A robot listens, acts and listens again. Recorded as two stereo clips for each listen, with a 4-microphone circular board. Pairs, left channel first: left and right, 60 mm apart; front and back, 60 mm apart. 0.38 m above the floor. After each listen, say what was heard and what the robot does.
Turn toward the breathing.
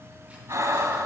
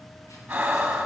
The breathing: 115° right. Turn 115° right.
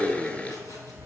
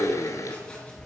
Keep listening.
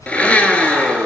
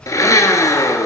Keep listening.
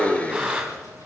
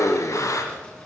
The breathing is now 10° right. Turn 10° right.
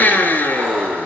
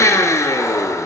Keep listening.
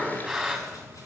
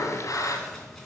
Found it: breathing, straight ahead.